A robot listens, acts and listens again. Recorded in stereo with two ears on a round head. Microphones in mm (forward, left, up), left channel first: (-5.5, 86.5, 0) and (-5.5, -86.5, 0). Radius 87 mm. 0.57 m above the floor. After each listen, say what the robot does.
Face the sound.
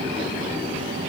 Keep listening.
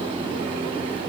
Keep listening.
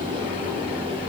I can't make out anything.